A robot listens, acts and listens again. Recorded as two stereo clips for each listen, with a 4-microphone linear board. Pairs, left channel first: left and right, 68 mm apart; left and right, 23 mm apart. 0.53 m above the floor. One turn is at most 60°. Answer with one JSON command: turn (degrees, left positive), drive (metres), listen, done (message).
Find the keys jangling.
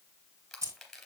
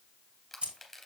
{"turn": -55}
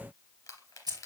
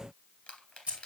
{"turn": -60}
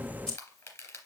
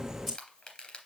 {"turn": 10}
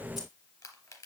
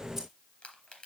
{"listen": true}
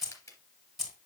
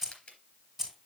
{"done": "Found it: keys jangling, straight ahead."}